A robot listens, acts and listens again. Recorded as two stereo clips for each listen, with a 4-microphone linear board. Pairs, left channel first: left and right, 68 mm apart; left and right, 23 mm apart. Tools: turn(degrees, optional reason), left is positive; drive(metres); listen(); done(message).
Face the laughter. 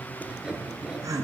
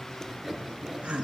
turn(degrees=-60, reason="The laughter: about 60° right or 120° right.")
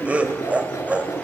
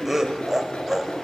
turn(degrees=-20, reason="So it is at 20° right.")
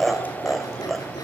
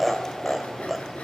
done("Facing the laughter, 1 to 2 m away.")